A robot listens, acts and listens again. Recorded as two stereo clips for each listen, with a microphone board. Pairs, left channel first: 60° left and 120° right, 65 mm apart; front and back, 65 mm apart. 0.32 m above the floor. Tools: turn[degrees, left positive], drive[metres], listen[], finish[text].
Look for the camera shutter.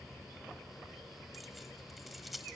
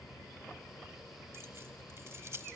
Action: listen[]
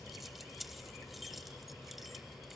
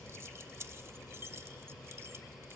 Action: listen[]
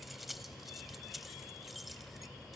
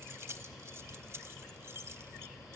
Action: finish[I can't make out a camera shutter to turn to.]